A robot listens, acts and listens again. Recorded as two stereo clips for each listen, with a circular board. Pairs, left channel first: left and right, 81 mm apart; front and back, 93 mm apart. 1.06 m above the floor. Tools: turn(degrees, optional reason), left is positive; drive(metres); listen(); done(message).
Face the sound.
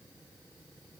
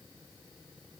listen()
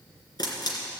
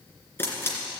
turn(degrees=65, reason="The camera shutter: 65° left.")
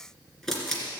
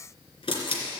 done("Facing the camera shutter, 2 to 4 m away.")